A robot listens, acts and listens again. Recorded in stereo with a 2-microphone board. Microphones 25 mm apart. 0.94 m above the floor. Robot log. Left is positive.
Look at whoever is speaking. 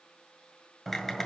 cmd idle
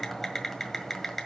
cmd idle
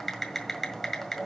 end: I can't make out anyone speaking, only typing on a keyboard.